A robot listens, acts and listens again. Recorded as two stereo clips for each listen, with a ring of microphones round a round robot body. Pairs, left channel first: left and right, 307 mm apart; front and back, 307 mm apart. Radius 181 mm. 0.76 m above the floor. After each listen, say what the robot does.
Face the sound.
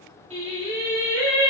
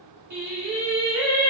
Turn 160° right.
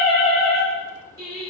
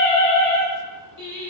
Turn 15° right.
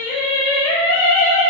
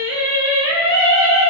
Found it: singing, straight ahead.